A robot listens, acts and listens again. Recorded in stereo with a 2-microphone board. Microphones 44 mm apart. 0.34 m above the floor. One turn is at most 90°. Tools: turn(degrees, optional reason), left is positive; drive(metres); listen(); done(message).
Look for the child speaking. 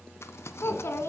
turn(degrees=70, reason="The child speaking: about 70° left or 110° left.")
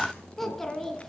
turn(degrees=10, reason="So it is at 10° left.")
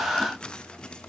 listen()
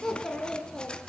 turn(degrees=10, reason="The child speaking is now 10° left.")
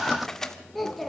done("Found it: a child speaking, straight ahead, 2 to 4 m away.")